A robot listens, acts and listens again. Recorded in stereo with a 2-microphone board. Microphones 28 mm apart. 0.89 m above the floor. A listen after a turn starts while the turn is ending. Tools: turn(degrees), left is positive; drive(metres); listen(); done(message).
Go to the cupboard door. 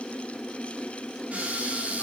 turn(degrees=-75)
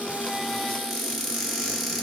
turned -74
drive(metres=1.0)
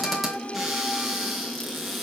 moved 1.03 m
drive(metres=1.0)
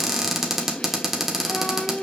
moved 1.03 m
turn(degrees=-15)
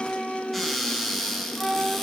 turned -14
drive(metres=1.0)
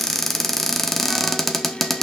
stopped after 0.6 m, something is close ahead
done("I am next to the cupboard door.")